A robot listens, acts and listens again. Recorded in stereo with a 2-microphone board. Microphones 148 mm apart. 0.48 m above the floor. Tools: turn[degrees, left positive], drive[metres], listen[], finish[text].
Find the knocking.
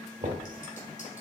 Thought: The knocking: about 55° right or 125° right.
Action: turn[-55]
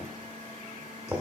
Thought: So it is at 15° right.
Action: turn[-15]
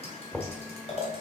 Action: finish[Found it: knocking, straight ahead, 1 to 2 m away.]